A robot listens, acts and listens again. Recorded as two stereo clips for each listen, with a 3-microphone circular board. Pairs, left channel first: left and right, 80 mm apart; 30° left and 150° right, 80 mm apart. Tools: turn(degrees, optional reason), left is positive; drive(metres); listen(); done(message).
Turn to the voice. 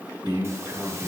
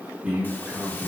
turn(degrees=-75, reason="The man speaking: 75° right.")
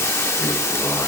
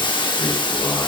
done("Facing the man speaking.")